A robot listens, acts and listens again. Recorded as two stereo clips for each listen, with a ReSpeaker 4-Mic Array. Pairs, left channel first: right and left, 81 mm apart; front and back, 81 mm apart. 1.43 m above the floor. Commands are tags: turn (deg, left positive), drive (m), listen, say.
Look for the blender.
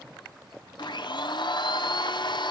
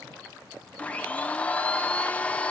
<turn deg="-75"/>
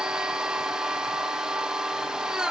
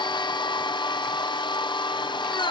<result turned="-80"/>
<turn deg="10"/>
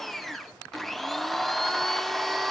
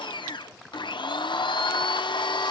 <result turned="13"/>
<say>Found it: a blender, straight ahead.</say>